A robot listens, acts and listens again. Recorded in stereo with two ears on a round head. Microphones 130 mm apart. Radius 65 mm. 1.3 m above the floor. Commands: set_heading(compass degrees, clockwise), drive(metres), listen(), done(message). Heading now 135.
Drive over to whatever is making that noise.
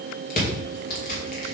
set_heading(65)
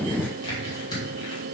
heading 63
set_heading(33)
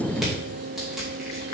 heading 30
listen()
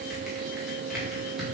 listen()
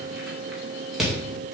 drive(1.0)
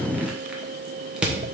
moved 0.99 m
set_heading(40)
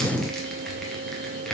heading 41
drive(1.0)
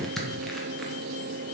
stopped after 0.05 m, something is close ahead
done("Arrived at the crushing, straight ahead.")